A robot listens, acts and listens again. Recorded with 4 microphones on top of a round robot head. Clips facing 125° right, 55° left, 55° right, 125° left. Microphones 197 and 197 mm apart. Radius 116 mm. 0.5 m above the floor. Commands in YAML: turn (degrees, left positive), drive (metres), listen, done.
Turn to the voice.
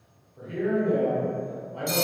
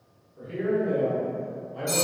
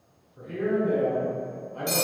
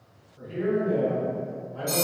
turn: -20
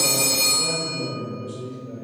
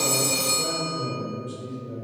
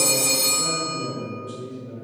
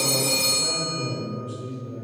done: "Facing the man speaking, 1 to 2 m away."